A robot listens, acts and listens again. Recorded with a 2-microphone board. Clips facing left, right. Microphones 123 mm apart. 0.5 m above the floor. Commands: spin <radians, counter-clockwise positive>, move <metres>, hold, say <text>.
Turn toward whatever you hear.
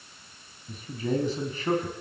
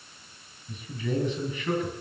spin 0.61
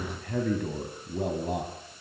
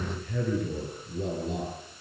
spin 2.09
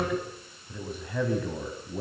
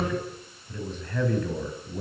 spin 0.26
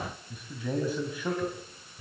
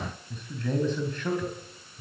say Found it: a man speaking, straight ahead, 2 to 4 m away.